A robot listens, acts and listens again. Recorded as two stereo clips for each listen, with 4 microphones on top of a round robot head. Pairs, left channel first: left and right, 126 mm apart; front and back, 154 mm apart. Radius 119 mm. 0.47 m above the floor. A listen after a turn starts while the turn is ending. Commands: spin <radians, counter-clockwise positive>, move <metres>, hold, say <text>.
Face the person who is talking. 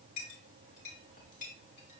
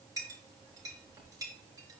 hold
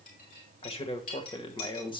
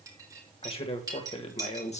spin 0.79
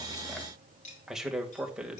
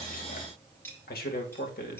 spin -0.17
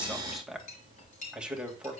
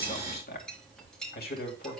say Facing the man speaking, 2 to 4 m away.